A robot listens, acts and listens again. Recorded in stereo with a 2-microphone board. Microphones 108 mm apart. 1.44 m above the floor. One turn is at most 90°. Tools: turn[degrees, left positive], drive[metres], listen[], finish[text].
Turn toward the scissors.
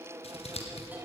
Thought: The scissors: about 70° left or 110° left.
Action: turn[70]
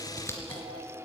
Thought: So it is at 25° left.
Action: turn[25]
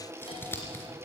Thought: The scissors is now 20° left.
Action: turn[20]
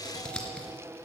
Thought: The scissors is now 10° left.
Action: turn[10]
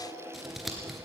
Action: finish[Facing the scissors.]